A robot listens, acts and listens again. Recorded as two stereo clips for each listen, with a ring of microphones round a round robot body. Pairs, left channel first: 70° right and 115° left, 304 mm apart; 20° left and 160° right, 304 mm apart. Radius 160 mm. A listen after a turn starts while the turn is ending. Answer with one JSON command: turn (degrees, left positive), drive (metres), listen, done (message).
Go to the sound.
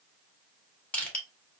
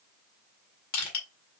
{"turn": 20}
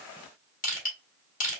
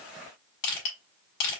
{"drive": 1.0}
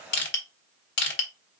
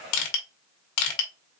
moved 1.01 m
{"turn": -10}
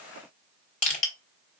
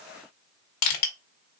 {"drive": 1.0}
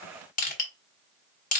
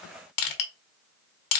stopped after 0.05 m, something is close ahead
{"done": "Arrived at the crushing, straight ahead."}